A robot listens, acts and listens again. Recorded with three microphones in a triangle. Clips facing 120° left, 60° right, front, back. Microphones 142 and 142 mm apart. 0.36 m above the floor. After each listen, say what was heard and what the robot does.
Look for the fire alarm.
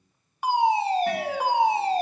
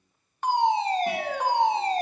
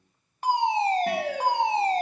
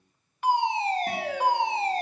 The fire alarm: 40° left. Turn 40° left.
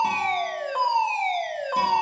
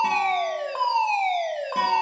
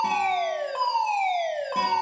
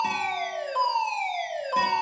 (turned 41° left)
Found it: a fire alarm, straight ahead, 2 to 4 m away.